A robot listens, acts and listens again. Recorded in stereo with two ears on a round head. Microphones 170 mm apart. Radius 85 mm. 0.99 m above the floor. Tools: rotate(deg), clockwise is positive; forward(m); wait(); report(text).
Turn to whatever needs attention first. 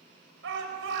rotate(70)
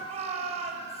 rotate(35)
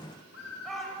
report("Found it: a shout, straight ahead, over 4 m away.")